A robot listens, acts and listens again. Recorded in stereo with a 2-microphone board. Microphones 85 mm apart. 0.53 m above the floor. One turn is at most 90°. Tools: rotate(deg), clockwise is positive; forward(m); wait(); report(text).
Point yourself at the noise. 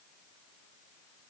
wait()
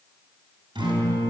rotate(65)
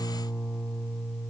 report("Facing the guitar, 2 to 4 m away.")